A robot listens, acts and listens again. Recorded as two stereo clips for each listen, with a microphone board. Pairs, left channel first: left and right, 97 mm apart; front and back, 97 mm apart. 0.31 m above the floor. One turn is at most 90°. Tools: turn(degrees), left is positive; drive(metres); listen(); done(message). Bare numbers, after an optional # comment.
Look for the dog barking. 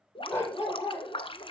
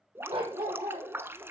# The dog barking: 155° left.
turn(90)
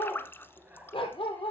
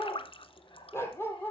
# The dog barking is now 65° left.
turn(65)
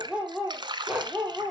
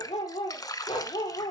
# The dog barking is now 10° right.
turn(-10)
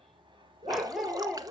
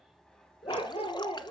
done("Facing the dog barking, 2 to 4 m away.")